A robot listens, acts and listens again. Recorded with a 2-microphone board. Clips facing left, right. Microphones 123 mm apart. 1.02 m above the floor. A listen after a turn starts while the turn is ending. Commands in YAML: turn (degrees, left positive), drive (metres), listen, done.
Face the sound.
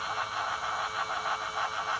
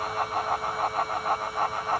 listen: true
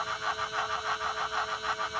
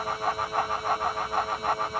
listen: true
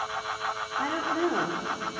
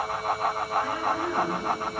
turn: 90
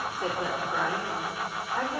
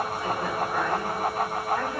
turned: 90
turn: 10
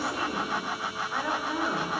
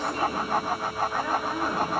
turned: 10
done: "Facing the woman speaking, 2 to 4 m away."